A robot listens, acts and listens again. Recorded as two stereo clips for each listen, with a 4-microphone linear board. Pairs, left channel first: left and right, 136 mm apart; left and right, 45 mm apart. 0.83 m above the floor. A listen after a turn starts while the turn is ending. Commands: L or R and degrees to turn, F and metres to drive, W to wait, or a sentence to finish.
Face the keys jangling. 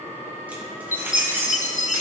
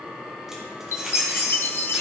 R15
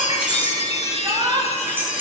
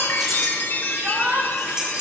R20
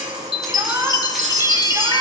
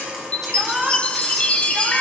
W
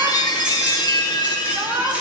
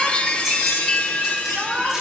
W
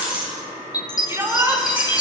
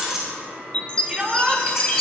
R30
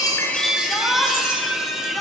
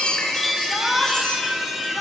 W
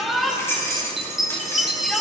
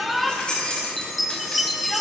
L20
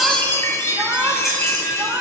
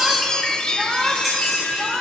W
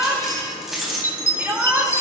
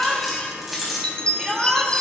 Facing the keys jangling, 2 to 4 m away.